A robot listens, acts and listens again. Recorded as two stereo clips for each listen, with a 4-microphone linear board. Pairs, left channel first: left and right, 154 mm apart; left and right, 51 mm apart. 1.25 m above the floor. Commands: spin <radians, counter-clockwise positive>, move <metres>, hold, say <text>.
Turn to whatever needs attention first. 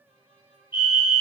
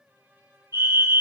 spin -1.57
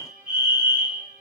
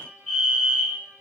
spin -0.17
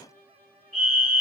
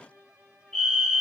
say Found it: a fire alarm, straight ahead.